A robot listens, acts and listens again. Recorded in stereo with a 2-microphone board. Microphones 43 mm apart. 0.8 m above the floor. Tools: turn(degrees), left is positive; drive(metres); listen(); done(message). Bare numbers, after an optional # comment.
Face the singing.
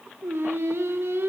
# The singing: about 75° right or 105° right.
turn(-75)
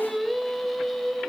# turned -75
done("Facing the singing, 2 to 4 m away.")